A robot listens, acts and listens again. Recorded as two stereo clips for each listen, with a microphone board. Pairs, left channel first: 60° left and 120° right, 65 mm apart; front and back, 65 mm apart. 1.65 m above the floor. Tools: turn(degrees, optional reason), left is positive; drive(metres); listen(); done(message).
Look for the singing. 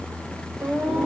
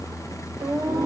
turn(degrees=155, reason="The singing: 155° left.")
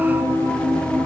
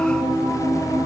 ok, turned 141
turn(degrees=15, reason="The singing is now 15° left.")
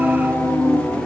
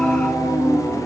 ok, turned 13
done("Found it: singing, straight ahead.")